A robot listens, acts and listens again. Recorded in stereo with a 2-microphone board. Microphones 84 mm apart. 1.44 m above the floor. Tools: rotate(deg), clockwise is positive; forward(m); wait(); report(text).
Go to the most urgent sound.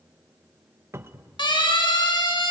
rotate(-65)
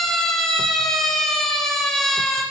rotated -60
forward(1.0)
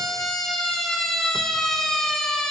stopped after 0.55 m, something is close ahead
report("Something is in my way. I am facing the siren but have not reached it.")